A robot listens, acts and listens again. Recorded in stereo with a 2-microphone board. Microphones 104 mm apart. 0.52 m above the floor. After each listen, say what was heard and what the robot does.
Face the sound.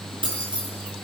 The keys jangling: about 50° right or 130° right. Turn 50° right.
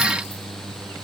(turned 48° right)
Keep listening.
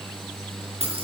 So it is at 85° right. Turn 85° right.
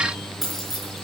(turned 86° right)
Facing the keys jangling.